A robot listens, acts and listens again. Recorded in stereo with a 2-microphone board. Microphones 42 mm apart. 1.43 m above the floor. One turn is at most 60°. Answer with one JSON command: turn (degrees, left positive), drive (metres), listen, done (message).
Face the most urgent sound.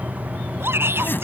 {"turn": -60}
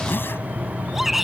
{"done": "Found it: a shout, straight ahead."}